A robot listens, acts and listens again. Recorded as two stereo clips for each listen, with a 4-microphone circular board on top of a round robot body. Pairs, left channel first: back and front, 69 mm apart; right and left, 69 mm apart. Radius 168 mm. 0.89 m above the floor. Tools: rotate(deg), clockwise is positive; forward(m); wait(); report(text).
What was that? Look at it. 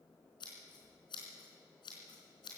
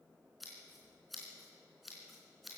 rotate(-180)
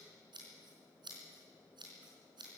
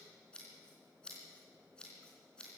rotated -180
rotate(15)
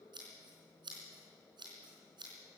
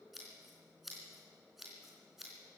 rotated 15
report("Found it: scissors, straight ahead, 2 to 4 m away.")